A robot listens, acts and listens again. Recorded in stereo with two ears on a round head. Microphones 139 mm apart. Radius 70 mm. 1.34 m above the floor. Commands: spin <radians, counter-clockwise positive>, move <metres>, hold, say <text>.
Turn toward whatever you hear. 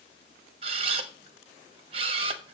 spin -0.61
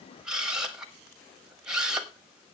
say Facing the camera shutter.